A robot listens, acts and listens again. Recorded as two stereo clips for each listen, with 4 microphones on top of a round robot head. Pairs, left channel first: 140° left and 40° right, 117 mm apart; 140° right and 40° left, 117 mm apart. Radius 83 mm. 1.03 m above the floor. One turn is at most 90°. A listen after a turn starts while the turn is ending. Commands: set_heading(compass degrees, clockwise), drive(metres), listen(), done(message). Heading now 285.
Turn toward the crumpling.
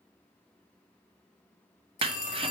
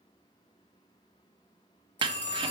done("Facing the crumpling.")